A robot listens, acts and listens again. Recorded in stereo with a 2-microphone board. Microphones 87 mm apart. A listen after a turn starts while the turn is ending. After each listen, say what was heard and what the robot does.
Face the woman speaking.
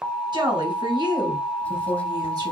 The woman speaking: about 55° right or 125° right. Turn 55° right.
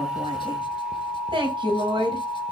So it is at 75° right. Turn 75° right.
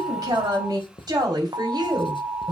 The woman speaking is now 55° right. Turn 55° right.
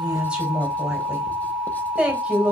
The woman speaking is now 10° right. Turn 10° right.
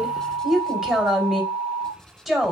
Facing the woman speaking.